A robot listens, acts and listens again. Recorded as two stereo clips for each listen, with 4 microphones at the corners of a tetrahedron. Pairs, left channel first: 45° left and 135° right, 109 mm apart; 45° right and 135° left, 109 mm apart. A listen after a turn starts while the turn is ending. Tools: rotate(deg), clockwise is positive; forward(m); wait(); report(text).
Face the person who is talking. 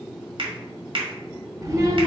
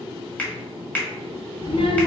rotate(75)
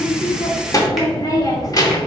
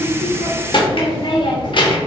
rotate(10)
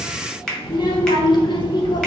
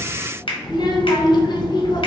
report("Facing the child speaking, under 1 m away.")